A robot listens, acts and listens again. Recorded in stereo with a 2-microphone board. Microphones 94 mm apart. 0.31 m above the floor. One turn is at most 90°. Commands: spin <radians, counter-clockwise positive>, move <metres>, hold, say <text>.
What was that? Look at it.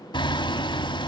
spin 0.96
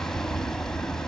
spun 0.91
say Facing the hammering.